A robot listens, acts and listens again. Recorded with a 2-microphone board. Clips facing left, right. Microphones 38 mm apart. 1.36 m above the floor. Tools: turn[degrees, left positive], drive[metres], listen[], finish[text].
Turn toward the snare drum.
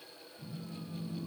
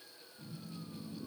Action: listen[]
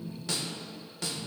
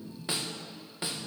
Thought: The snare drum: about 20° right or 160° right.
Action: turn[-20]
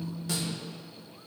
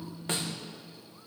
Action: listen[]
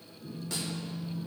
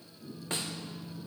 Thought: So it is at 140° right.
Action: turn[-140]
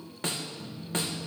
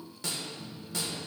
Thought: The snare drum is now 45° left.
Action: turn[45]
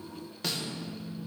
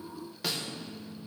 Action: finish[Facing the snare drum, 1 to 2 m away.]